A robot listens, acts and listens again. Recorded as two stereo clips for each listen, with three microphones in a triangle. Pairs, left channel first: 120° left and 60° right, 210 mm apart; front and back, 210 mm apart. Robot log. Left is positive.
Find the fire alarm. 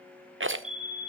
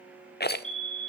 note: The fire alarm: 55° left.
cmd yaw +55
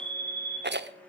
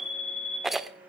end: Found it: a fire alarm, straight ahead.